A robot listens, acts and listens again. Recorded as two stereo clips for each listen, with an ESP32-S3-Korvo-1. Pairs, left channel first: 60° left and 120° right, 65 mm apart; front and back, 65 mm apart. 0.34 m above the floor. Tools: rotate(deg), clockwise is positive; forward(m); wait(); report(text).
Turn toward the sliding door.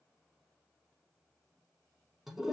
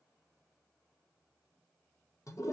wait()
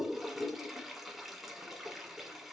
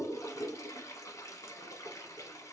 wait()
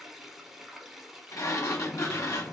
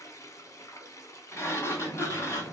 rotate(-45)
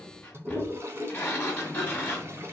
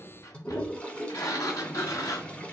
report("Facing the sliding door.")